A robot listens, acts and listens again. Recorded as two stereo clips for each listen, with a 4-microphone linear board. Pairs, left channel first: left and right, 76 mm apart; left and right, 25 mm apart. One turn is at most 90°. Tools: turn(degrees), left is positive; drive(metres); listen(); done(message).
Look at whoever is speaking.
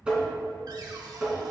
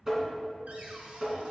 listen()
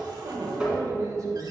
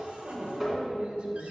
turn(degrees=-50)
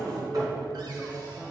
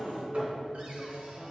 turn(degrees=-10)
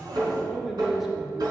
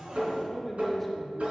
done("Facing the man speaking.")